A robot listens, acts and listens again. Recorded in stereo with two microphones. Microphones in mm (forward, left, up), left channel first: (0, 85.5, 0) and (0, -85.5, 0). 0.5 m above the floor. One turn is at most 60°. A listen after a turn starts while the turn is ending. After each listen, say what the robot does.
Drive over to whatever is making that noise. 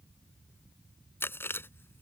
Turn 30° left.
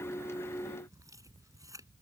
Keep listening.
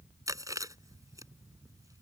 Turn 20° right.
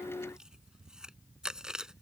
Drive 1.0 m forward.
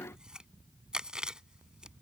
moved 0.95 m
Drive 1.0 m forward.
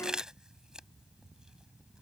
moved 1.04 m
Drive 1.0 m forward.
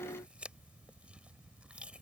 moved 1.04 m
Keep listening.
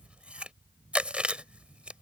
Drive 1.0 m forward.
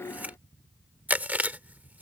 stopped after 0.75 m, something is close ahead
Turn 10° right.
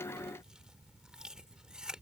Arrived at the chewing, straight ahead.